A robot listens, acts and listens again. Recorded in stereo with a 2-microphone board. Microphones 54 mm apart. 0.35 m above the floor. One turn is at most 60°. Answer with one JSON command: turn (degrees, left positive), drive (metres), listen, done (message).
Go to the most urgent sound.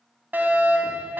{"turn": -35}
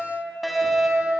{"drive": 1.0}
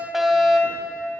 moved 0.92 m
{"drive": 1.0}
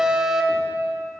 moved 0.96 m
{"turn": -15}
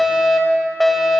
{"drive": 1.0}
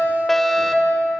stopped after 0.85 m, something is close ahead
{"turn": 15}
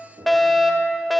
{"done": "I am next to the fire alarm."}